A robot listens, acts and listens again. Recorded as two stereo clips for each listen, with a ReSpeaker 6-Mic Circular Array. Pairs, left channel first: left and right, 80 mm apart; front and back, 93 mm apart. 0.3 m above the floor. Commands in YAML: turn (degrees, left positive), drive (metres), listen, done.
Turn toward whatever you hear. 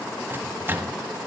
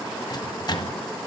turn: -35
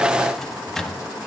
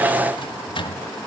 done: "Facing the microwave."